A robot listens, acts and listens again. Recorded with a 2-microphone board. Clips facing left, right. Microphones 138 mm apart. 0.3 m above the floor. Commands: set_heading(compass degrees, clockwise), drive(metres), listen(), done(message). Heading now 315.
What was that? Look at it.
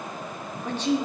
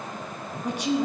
set_heading(345)
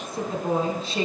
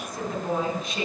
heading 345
set_heading(315)
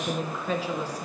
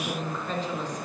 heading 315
set_heading(305)
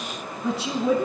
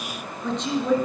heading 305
set_heading(295)
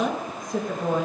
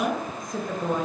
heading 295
done("Facing the woman speaking.")